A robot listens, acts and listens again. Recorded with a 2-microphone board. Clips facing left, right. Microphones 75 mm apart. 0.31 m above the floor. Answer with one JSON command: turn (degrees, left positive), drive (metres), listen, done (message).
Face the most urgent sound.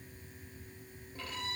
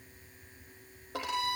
{"listen": true}
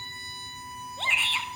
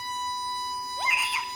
{"turn": -30}
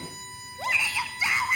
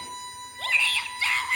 {"turn": 20}
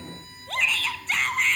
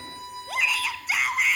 {"done": "Facing the shout."}